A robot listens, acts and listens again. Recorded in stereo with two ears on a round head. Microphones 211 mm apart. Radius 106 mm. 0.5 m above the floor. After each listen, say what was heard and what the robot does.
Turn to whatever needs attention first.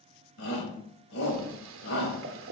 The shout: about 55° left or 125° left. Turn 55° left.
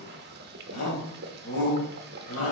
So it is at 65° left. Turn 65° left.
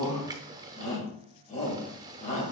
The shout is now 30° left. Turn 30° left.
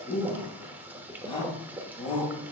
The shout is now 20° left. Turn 20° left.
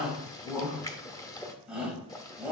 Found it: a shout, straight ahead, 2 to 4 m away.